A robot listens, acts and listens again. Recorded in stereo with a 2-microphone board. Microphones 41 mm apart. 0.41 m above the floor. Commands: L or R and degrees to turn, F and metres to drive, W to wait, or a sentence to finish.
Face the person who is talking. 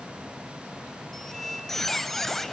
W
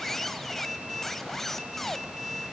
W
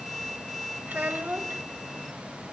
R45
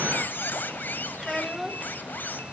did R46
Found it: a child speaking, straight ahead, 1 to 2 m away.